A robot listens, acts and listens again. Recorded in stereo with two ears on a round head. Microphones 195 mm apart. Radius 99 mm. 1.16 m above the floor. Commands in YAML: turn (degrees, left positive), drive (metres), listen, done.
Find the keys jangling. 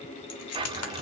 turn: 90
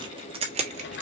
turn: -30
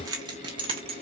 turn: -30
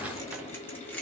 done: "Found it: keys jangling, straight ahead."